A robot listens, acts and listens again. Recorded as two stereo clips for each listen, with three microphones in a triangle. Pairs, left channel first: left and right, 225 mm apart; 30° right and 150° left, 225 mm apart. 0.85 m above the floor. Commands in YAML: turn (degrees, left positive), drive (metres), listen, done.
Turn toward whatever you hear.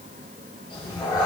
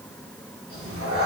turn: 160
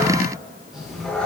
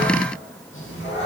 done: "Facing the cat meowing, 1 to 2 m away."